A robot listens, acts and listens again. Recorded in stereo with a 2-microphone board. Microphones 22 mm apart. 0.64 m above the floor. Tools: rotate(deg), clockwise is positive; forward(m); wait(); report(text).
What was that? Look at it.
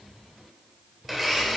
rotate(30)
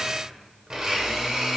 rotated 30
rotate(145)
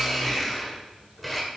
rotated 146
report("Facing the blender.")